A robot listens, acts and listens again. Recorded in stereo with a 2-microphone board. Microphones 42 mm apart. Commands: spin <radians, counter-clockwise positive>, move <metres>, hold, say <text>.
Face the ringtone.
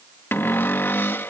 hold
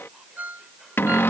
spin -0.79
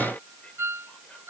spin -1.66
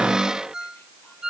spin -0.35
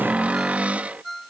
say Found it: a ringtone, straight ahead.